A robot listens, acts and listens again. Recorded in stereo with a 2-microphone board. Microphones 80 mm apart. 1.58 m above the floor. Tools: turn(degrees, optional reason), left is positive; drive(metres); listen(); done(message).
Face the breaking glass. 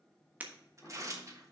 turn(degrees=-20, reason="The breaking glass: about 20° right or 160° right.")
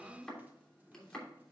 listen()
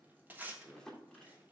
done("I heard breaking glass, but can't make it out now. It was about straight ahead or 140° right.")